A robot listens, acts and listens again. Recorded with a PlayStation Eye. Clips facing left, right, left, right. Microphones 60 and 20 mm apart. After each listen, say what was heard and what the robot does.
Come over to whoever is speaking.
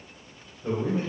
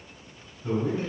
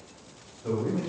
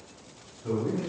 The man speaking: about 45° left or 135° left. Turn 45° left.
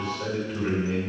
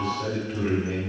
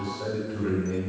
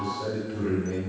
Drive 1.0 m forward.
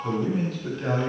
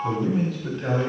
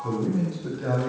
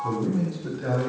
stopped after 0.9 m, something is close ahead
Arrived at the man speaking, straight ahead.